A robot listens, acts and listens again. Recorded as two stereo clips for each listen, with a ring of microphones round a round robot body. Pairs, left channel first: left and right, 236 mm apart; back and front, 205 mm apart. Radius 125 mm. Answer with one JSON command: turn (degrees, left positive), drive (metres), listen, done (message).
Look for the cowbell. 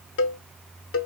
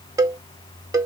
{"turn": 70}
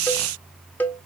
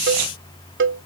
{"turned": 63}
{"turn": 10}
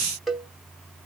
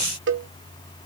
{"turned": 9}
{"done": "Found it: a cowbell, straight ahead, 1 to 2 m away."}